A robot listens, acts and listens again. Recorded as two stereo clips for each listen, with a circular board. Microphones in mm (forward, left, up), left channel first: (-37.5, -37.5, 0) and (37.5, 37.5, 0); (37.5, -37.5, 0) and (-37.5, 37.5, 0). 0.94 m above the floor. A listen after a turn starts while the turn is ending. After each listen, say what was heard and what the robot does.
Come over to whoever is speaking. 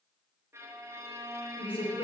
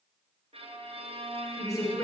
The woman speaking: 105° right. Turn 105° right.
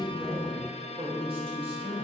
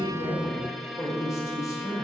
The woman speaking is now 15° left. Turn 15° left.
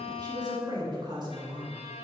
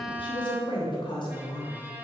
Drive 1.0 m forward.
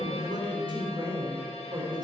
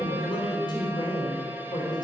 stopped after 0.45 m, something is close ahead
Blocked. The woman speaking is further on, straight ahead.